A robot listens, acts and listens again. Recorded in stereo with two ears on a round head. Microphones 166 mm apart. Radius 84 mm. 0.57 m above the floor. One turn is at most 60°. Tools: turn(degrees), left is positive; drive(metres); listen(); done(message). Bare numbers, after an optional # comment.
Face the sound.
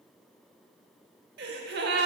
# The gasp: about 65° right or 115° right.
turn(-60)
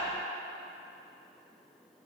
listen()
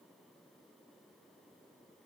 done("I heard a gasp, but can't make it out now. It was about 5° right or 55° right.")